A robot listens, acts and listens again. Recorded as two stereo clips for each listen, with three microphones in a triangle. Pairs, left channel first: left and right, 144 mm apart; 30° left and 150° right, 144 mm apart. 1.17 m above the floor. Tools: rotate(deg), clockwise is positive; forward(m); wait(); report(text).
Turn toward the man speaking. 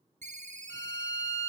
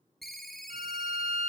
wait()
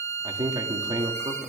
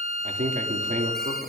rotate(145)
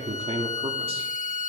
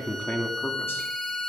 rotate(45)
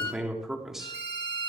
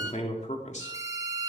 report("Facing the man speaking.")